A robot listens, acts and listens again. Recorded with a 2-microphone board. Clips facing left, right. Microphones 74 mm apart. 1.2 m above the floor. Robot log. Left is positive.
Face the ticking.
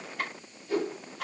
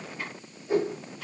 cmd yaw +90
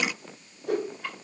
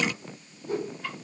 end: Found it: ticking, straight ahead, 2 to 4 m away.